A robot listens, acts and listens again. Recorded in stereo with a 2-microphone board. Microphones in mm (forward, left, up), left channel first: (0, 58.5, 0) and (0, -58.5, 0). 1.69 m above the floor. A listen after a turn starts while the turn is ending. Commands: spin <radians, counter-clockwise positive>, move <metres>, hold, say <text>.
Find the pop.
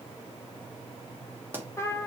spin -0.26
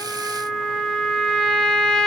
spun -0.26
hold
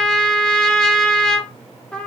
say I heard a pop, but can't make it out now. It was about straight ahead or 150° right.